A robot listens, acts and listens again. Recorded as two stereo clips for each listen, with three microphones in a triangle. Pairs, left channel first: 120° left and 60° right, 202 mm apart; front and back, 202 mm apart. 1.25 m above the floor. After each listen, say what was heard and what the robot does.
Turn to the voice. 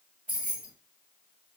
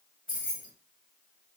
Keep listening.
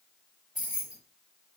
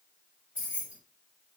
Keep listening.
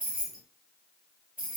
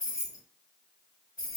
I can't make out anyone speaking to turn to.